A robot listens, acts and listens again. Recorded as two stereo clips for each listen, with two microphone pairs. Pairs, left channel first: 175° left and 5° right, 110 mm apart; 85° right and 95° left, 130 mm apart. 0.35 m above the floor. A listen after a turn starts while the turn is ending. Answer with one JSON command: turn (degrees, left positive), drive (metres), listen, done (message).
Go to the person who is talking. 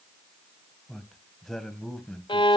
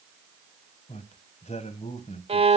{"turn": -100}
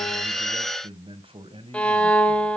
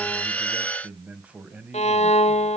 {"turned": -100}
{"turn": 20}
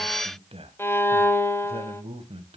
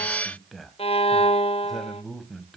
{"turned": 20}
{"drive": 1.0}
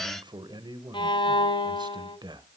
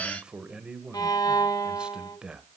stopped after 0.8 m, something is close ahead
{"turn": 15}
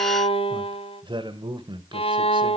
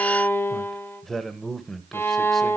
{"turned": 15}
{"done": "I am next to the man speaking."}